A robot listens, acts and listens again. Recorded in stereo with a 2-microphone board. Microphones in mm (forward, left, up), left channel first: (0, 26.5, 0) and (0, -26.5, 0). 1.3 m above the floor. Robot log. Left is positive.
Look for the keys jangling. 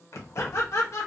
note: The keys jangling: about 55° left or 125° left.
cmd yaw +55
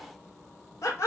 end: Found it: keys jangling, straight ahead, under 1 m away.